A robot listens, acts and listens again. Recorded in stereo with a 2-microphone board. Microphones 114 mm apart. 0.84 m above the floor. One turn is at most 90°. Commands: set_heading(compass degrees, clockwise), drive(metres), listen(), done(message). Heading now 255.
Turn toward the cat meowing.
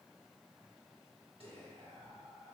listen()
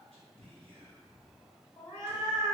set_heading(215)
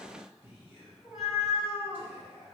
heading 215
done("Facing the cat meowing.")